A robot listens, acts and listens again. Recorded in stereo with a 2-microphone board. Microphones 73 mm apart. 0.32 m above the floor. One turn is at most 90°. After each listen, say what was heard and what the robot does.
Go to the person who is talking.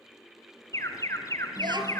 Turn 90° right.
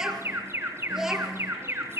Drive 1.0 m forward.
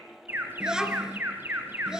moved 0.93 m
The child speaking is now 10° right. Turn 10° right.
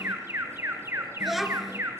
Drive 1.0 m forward.
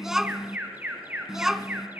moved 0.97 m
Drive 1.0 m forward.
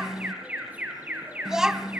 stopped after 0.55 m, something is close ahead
The child speaking is now 10° right. Turn 10° right.
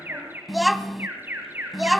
I am next to the child speaking.